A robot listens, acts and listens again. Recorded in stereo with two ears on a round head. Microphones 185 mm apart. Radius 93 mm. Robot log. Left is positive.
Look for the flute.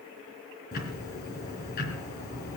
cmd idle
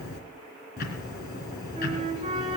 note: The flute: about 30° right or 150° right.
cmd yaw -30
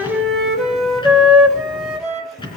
end: Found it: a flute, straight ahead.